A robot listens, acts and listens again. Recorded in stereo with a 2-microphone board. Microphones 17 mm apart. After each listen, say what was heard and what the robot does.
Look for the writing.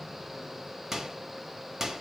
Keep listening.
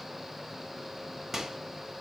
Keep listening.
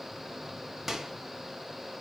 I can't make out writing, only a microwave.